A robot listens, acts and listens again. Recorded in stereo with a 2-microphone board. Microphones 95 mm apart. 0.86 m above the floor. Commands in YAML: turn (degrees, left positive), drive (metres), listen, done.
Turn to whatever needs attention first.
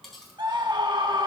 turn: -55
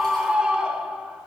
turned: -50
turn: -10
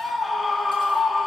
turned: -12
done: "Facing the scream, 1 to 2 m away."